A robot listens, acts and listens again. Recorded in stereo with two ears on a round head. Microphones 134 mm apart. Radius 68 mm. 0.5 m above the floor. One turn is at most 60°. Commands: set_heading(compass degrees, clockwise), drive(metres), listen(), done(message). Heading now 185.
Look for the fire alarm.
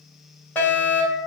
set_heading(155)
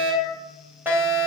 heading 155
set_heading(170)
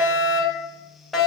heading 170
done("Found it: a fire alarm, straight ahead, 2 to 4 m away.")